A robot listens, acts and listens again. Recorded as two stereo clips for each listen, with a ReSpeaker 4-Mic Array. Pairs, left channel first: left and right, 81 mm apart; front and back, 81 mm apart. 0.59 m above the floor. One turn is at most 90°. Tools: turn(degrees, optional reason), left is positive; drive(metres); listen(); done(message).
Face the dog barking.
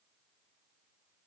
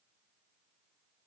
listen()
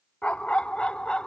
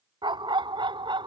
turn(degrees=90, reason="The dog barking: 170° left.")
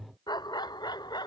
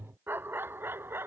turn(degrees=90, reason="The dog barking is now 120° left.")
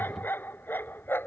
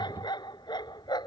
turn(degrees=25, reason="The dog barking is now 25° left.")
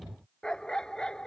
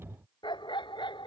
turn(degrees=10, reason="The dog barking is now 10° left.")
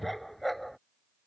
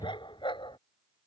done("Facing the dog barking.")